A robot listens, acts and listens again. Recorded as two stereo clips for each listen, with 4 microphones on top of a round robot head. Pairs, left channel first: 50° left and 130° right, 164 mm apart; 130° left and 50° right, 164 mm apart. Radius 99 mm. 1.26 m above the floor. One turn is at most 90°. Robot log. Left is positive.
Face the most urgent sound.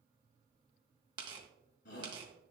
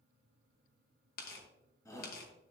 note: The shout: 60° left.
cmd yaw +60
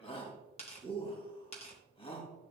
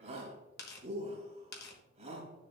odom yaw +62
end: Found it: a shout, straight ahead.